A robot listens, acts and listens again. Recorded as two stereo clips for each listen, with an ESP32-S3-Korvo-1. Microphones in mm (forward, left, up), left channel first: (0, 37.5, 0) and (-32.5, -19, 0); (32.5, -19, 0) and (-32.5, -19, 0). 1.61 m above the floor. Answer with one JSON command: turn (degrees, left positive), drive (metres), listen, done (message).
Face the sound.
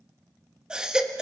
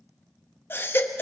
{"turn": -45}
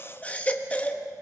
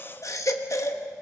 {"done": "Found it: a baby crying, straight ahead."}